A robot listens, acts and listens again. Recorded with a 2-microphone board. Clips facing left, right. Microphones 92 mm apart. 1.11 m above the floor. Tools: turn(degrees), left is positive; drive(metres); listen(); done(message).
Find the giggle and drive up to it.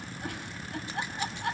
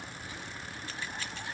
turn(degrees=70)
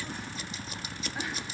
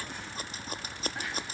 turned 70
listen()
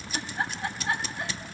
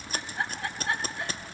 drive(metres=1.0)
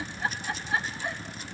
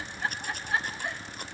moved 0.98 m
drive(metres=1.0)
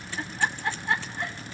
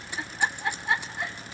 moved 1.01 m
drive(metres=1.0)
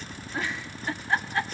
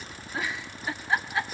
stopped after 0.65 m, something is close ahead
done("Arrived at the giggle, straight ahead.")